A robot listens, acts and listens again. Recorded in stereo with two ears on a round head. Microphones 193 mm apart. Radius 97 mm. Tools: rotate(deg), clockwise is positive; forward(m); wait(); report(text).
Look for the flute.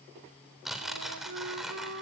rotate(70)
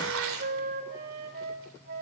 rotate(45)
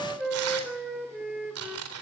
report("Facing the flute, 2 to 4 m away.")